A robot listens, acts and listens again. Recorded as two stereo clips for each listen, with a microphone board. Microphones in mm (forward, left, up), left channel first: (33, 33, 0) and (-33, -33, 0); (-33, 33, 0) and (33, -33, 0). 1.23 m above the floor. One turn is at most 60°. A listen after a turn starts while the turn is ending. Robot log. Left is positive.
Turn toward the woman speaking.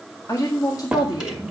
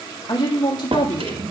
note: The woman speaking: 90° left.
cmd yaw +60
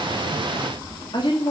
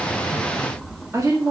note: The woman speaking is now 10° left.
cmd yaw +10
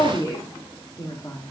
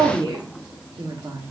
note: The woman speaking is now 10° right.
cmd yaw -10
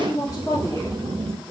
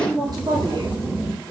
note: The woman speaking is now 15° right.
cmd yaw -15
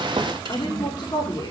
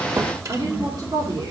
end: Found it: a woman speaking, straight ahead.